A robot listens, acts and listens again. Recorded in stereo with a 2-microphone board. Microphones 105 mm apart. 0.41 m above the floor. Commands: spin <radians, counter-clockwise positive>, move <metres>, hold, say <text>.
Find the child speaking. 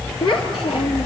spin 0.87
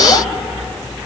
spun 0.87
hold
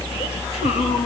hold
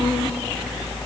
say I heard a child speaking, but can't make it out now. It was about straight ahead or 80° left.